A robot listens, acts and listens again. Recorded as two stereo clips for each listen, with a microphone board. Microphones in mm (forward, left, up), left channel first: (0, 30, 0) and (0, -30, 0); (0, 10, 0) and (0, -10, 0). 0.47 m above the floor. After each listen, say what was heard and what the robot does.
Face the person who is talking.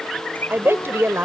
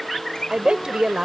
The woman speaking: about 40° right or 140° right. Turn 40° right.
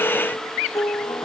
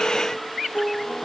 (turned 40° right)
Keep listening.
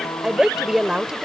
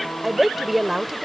So it is at 10° right. Turn 10° right.
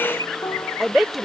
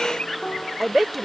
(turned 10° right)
Facing the woman speaking.